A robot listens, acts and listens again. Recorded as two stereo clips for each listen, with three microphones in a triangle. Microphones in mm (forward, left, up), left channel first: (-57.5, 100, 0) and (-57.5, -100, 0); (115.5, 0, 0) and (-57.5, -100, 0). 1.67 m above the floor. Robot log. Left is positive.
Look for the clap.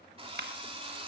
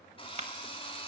note: The clap: 100° right.
cmd yaw -100
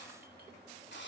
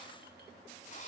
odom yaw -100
end: Facing the clap.